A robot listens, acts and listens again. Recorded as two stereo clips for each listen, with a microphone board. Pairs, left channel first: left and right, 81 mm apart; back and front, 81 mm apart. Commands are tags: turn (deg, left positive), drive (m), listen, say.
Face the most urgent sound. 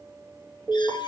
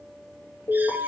<turn deg="-170"/>
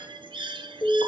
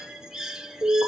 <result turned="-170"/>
<turn deg="45"/>
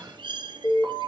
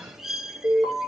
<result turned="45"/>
<turn deg="40"/>
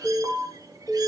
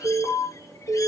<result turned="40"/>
<say>Found it: an alarm, straight ahead, 2 to 4 m away.</say>